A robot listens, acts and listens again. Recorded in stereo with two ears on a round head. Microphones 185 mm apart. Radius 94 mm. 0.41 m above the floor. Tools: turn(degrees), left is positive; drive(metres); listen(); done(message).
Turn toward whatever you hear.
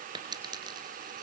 turn(degrees=-20)
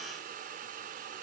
listen()
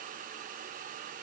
done("I heard a dropped coin, but can't make it out now. It was about straight ahead or 140° right.")